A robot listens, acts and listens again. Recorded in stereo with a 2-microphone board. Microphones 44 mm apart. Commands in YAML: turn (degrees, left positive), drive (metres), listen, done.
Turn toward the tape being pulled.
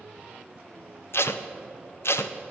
turn: 75
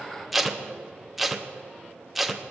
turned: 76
done: "Found it: tape being pulled, straight ahead, under 1 m away."